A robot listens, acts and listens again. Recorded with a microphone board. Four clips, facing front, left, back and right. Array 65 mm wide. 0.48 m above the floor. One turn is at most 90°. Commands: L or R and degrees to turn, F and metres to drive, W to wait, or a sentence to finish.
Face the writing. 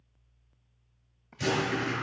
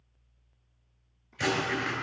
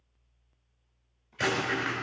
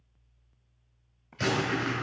R90
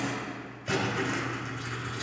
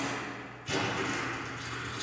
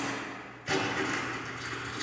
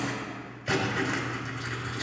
R85
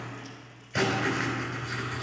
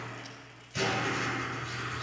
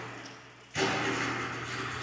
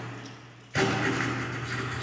R40
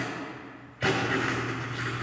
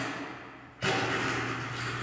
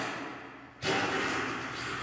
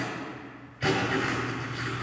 Facing the writing.